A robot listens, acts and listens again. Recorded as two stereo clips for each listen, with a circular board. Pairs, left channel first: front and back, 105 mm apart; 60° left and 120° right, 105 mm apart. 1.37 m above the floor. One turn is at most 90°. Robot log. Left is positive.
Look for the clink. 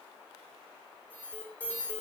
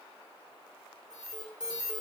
cmd idle
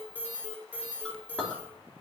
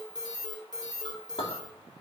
note: The clink: 80° left.
cmd yaw +80
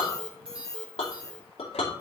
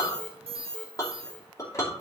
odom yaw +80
end: Found it: a clink, straight ahead.